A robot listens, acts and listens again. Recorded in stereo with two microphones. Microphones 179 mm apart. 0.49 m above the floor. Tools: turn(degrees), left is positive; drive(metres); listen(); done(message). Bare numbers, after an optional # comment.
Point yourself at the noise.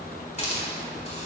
# The hiss: about 40° left or 140° left.
turn(40)
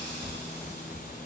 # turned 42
listen()
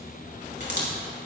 # So it is at 100° left.
turn(100)
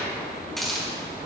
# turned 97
done("Found it: a hiss, straight ahead, over 4 m away.")